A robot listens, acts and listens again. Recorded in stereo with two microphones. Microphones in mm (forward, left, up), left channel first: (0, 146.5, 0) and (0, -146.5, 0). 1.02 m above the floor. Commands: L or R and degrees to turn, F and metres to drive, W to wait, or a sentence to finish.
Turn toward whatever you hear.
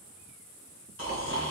R45
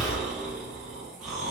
Facing the snoring, 1 to 2 m away.